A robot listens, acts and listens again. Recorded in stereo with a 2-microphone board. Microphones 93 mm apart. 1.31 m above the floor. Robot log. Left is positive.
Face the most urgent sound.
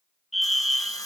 cmd yaw +30
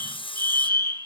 note: So it is at 150° left.
cmd yaw +150
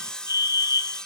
note: The fire alarm is now 45° left.
cmd yaw +45
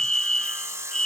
end: Found it: a fire alarm, straight ahead.